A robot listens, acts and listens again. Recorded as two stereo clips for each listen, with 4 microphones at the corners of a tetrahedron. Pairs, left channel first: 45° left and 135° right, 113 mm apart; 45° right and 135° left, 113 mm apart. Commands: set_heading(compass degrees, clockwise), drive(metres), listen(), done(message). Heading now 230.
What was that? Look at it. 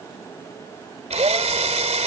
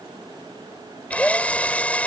set_heading(355)
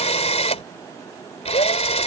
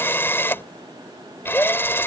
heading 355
set_heading(330)
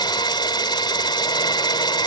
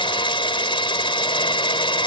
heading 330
done("Facing the drill.")